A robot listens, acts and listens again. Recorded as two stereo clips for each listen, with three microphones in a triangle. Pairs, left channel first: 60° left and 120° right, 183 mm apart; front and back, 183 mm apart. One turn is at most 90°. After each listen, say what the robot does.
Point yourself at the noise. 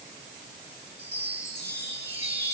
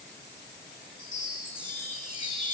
Turn 60° right.
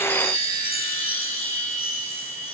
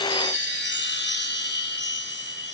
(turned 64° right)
Facing the chime, over 4 m away.